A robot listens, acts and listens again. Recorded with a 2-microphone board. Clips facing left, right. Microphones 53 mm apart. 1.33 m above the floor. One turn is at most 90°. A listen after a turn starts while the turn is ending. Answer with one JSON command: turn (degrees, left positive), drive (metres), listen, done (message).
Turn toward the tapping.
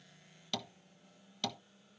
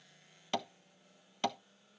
{"turn": -30}
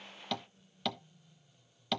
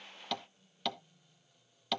{"done": "Found it: tapping, straight ahead, 1 to 2 m away."}